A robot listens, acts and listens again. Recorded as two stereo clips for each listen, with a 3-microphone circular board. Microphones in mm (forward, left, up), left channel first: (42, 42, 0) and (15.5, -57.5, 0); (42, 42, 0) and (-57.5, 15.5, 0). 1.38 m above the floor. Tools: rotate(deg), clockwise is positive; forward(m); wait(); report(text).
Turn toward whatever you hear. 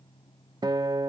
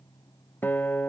rotate(55)
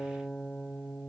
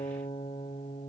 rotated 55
rotate(10)
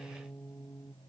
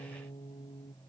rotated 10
report("Found it: a guitar, straight ahead.")